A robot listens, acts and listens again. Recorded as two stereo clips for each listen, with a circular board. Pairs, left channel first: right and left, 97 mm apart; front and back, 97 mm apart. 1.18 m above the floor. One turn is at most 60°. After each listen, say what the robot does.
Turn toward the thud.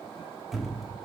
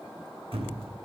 Turn 60° left.
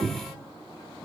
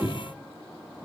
Turn 60° left.
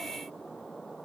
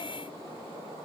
Turn 55° left.
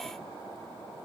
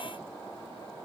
Facing where the thud came from. I can't hear it now.